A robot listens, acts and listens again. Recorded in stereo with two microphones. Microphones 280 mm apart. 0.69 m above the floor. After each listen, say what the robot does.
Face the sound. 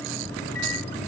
Turn 45° left.
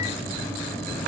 Found it: a microwave, straight ahead.